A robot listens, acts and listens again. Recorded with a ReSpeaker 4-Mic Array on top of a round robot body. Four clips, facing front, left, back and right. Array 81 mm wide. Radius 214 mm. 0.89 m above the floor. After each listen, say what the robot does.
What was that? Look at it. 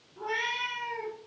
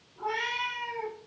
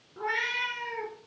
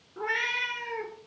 Turn 115° right.
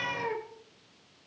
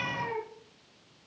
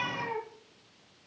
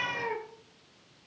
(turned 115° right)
Turn 50° right.
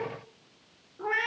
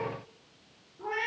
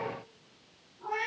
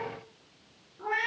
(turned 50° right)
Turn 10° right.
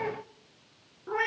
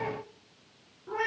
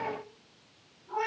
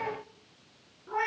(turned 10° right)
Facing the cat meowing, 2 to 4 m away.